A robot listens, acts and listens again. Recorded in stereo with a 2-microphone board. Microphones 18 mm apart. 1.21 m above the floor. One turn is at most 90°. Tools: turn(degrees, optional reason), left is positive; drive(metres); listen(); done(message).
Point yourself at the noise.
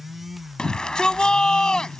turn(degrees=45, reason="The shout: about 45° left or 135° left.")
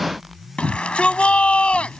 turn(degrees=85, reason="So it is at 85° left.")
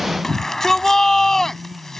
turn(degrees=20, reason="The shout is now 20° left.")
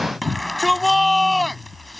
done("Found it: a shout, straight ahead.")